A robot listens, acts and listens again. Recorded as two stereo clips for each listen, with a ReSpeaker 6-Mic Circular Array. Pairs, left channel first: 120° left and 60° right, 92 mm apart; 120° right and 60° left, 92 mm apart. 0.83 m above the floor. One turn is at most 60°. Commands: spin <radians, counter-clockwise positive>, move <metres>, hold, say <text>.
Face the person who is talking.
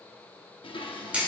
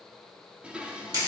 hold
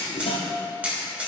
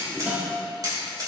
hold
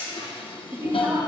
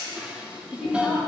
spin -0.35
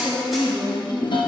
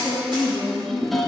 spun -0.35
say Found it: a woman speaking, straight ahead, 1 to 2 m away.